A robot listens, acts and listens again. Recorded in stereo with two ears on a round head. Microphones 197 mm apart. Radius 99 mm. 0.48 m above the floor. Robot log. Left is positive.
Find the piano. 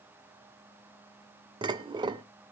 cmd idle
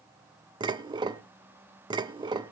cmd idle
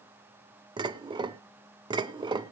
end: I can't make out a piano to turn to.